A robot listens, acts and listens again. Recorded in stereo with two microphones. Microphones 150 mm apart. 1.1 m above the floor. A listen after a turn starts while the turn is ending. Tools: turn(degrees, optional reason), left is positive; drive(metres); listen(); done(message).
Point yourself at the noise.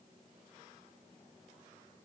listen()
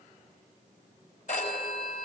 turn(degrees=55, reason="The phone ringing: about 55° left or 125° left.")
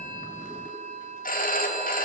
turn(degrees=70, reason="So it is at 70° left.")
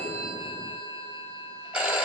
done("Facing the phone ringing, 2 to 4 m away.")